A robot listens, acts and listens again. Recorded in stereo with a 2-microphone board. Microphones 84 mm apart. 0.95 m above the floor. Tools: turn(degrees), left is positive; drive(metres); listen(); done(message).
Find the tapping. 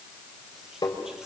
turn(degrees=55)
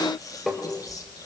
done("Facing the tapping.")